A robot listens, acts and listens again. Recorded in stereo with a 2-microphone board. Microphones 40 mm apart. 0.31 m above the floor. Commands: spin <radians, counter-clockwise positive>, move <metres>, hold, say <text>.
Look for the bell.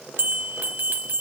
spin -0.96
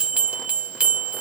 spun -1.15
spin -0.70
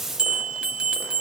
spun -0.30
spin -0.35
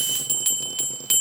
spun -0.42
say Found it: a bell, straight ahead, 1 to 2 m away.